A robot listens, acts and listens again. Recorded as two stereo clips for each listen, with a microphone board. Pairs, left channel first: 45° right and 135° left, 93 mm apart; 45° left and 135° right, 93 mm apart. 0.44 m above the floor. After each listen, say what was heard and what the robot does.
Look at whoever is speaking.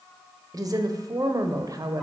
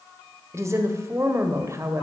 The woman speaking: 175° left. Turn 175° left.
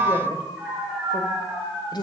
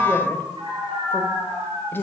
The woman speaking is now 15° right. Turn 15° right.
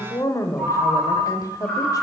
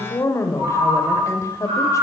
Found it: a woman speaking, straight ahead.